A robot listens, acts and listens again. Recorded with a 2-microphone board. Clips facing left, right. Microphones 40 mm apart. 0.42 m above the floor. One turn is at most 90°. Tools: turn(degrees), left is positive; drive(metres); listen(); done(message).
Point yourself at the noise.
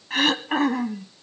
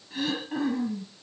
turn(degrees=90)
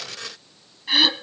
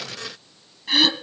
done("Found it: throat clearing, straight ahead, 1 to 2 m away.")